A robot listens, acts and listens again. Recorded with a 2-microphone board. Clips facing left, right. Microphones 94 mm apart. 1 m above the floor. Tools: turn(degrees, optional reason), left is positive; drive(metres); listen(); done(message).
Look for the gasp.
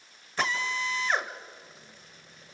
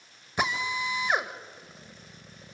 listen()
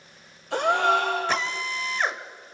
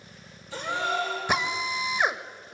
turn(degrees=70, reason="The gasp: about 70° left or 110° left.")
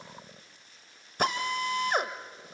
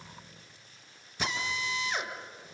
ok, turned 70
listen()
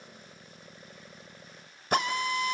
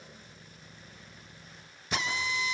done("I heard a gasp, but can't make it out now. It was about straight ahead or 40° left.")